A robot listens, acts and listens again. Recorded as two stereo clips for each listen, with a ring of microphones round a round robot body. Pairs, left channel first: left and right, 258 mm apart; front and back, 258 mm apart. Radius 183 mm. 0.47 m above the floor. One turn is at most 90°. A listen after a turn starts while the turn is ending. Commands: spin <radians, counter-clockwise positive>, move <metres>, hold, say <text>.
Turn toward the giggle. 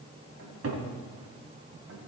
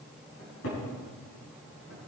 hold
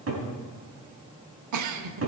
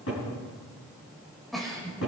spin -1.57
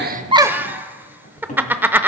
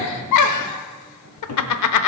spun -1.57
say Found it: a giggle, straight ahead, under 1 m away.